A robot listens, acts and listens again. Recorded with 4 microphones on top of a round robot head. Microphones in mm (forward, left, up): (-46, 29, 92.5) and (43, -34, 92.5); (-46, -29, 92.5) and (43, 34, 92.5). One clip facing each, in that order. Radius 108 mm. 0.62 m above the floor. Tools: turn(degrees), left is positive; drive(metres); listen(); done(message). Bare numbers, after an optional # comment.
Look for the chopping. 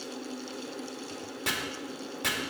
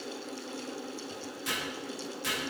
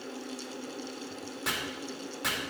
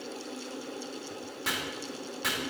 # The chopping: 125° left.
turn(125)
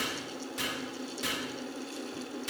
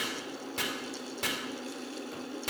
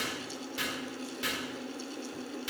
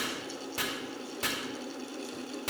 # The chopping is now 10° right.
turn(-10)
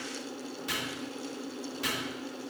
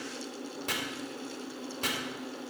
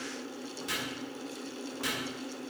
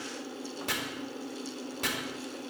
done("Found it: chopping, straight ahead, 2 to 4 m away.")